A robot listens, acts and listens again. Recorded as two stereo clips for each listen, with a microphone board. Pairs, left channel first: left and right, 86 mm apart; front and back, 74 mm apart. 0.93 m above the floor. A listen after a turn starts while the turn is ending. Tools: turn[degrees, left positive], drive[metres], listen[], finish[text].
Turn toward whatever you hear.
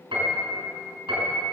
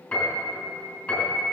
Thought: The piano: 75° right.
Action: turn[-75]
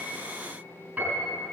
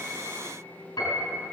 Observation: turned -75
Thought: The piano is now 20° right.
Action: turn[-20]
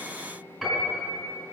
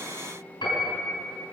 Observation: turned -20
Action: finish[Facing the piano.]